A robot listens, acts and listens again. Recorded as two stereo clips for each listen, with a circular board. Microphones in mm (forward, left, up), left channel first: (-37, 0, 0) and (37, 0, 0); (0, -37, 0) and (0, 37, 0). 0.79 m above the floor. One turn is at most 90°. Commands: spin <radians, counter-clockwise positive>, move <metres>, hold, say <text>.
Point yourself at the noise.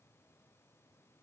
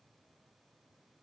hold
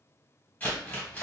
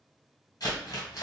spin -1.57
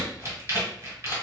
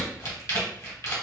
spin -0.79
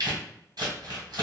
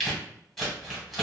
say Facing the crumpling.